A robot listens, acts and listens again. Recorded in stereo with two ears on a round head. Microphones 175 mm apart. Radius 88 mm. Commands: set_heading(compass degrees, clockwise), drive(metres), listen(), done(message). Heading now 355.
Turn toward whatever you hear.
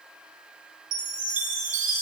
set_heading(35)
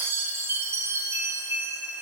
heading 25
set_heading(40)
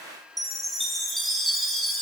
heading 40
done("Found it: a chime, straight ahead, over 4 m away.")